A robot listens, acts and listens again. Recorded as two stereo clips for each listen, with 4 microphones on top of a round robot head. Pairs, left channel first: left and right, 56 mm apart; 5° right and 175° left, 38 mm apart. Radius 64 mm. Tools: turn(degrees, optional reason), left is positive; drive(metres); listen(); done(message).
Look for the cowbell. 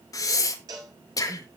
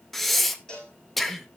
turn(degrees=-75, reason="The cowbell: 75° right.")
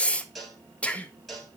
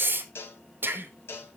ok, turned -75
done("Found it: a cowbell, straight ahead, over 4 m away.")